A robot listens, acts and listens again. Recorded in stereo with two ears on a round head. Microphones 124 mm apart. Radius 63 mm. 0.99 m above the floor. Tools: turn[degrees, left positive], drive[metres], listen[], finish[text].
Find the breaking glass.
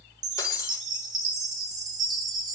Thought: The breaking glass: about 25° left or 155° left.
Action: turn[25]
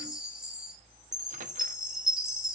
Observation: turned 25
Action: listen[]
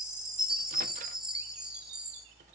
Action: finish[I heard breaking glass, but can't make it out now. It was about straight ahead or 130° left.]